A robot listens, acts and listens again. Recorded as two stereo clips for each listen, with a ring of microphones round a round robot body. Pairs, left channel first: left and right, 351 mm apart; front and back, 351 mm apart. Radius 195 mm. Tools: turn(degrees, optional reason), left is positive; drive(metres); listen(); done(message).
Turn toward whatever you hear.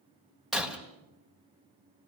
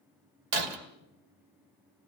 turn(degrees=180, reason="The breaking glass: straight behind.")
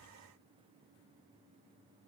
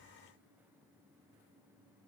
done("Facing where the breaking glass came from. I can't hear it now.")